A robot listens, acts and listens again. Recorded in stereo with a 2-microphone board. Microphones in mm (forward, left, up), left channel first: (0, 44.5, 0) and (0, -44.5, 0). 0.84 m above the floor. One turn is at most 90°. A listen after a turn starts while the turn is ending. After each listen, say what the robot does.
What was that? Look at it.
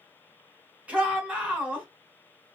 Turn 30° right.
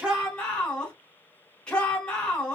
Turn 15° left.
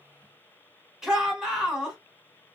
Found it: a shout, straight ahead.